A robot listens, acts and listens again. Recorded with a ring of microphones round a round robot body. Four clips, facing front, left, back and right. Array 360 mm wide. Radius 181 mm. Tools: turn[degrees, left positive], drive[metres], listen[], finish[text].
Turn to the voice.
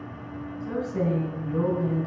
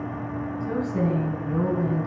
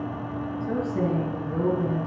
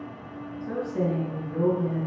Thought: The woman speaking: 65° left.
Action: turn[65]
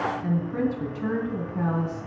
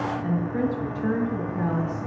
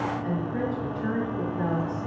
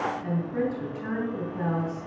Action: finish[Found it: a woman speaking, straight ahead.]